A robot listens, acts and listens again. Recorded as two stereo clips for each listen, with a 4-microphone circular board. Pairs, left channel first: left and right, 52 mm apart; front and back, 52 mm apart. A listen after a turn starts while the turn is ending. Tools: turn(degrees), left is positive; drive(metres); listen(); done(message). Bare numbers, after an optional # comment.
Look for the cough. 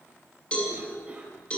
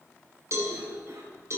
# The cough: 160° right.
turn(-160)
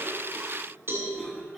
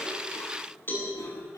done("Found it: a cough, straight ahead, over 4 m away.")